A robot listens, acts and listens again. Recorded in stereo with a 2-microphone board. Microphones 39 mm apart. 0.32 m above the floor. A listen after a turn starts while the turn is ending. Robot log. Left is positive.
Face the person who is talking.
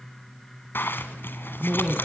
note: The man speaking: about 20° right or 160° right.
cmd yaw -20
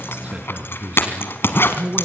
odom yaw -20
note: So it is at 140° right.
cmd yaw -140
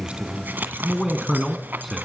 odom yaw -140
end: Found it: a man speaking, straight ahead, 2 to 4 m away.